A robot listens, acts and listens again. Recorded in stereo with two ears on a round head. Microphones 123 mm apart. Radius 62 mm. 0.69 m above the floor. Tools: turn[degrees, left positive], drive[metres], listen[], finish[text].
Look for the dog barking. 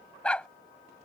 Action: turn[30]
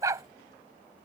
Thought: So it is at 25° right.
Action: turn[-25]
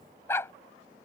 Thought: The dog barking is now 20° left.
Action: turn[20]
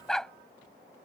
Action: finish[Facing the dog barking.]